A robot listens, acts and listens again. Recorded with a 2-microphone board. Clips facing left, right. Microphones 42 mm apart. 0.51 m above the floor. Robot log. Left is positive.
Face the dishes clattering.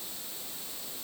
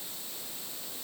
cmd idle
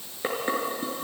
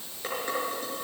note: The dishes clattering: about 25° left or 155° left.
cmd yaw +25
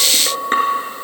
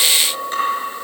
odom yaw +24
note: So it is at 130° left.
cmd yaw +130
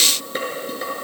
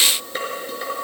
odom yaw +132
end: Facing the dishes clattering.